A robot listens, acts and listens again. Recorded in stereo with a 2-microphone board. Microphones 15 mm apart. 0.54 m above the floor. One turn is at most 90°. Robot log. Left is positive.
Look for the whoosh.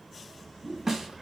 cmd yaw -90
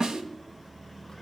end: Found it: a whoosh, straight ahead, over 4 m away.